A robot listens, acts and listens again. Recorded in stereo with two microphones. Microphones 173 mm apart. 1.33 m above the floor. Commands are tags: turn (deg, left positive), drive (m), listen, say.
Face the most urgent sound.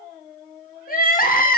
<turn deg="50"/>
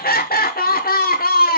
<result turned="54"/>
<turn deg="65"/>
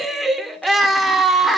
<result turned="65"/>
<say>Facing the crying, 1 to 2 m away.</say>